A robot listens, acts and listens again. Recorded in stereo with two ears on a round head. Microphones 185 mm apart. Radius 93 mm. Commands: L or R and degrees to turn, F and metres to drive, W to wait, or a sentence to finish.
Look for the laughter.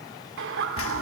R70
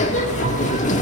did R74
W
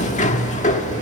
W
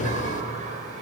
R35
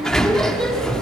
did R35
W
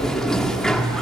W
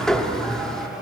I heard laughter from this way, but can't make it out now.